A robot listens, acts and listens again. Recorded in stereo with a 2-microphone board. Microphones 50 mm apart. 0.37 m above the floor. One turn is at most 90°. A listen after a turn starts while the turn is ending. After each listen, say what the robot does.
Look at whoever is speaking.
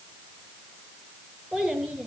Turn 30° right.
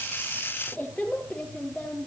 Turn 25° left.
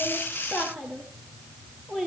Found it: a child speaking, straight ahead.